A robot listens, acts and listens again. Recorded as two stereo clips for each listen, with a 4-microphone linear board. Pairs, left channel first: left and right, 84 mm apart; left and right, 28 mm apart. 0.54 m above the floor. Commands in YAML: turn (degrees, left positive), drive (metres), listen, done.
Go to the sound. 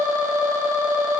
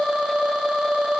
listen: true
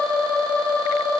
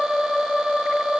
listen: true
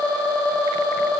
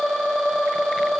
done: "I can't make out anything."